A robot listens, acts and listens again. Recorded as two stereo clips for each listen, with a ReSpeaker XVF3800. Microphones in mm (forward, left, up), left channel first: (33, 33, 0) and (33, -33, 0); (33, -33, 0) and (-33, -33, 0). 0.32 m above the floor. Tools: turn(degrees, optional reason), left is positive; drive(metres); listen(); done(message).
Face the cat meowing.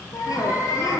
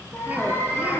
turn(degrees=55, reason="The cat meowing: 55° left.")
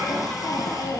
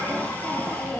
listen()
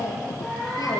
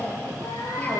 turn(degrees=10, reason="The cat meowing is now 10° left.")
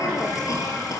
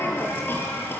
listen()
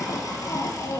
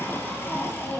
listen()
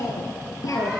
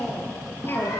done("Facing where the cat meowing came from. I can't hear it now.")